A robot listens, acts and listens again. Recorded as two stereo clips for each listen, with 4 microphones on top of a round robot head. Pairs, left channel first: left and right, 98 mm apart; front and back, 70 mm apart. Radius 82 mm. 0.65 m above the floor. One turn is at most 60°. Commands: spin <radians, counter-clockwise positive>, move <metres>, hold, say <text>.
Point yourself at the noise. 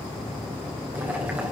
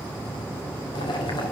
spin -0.26
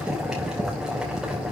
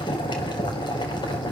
say Facing the boiling.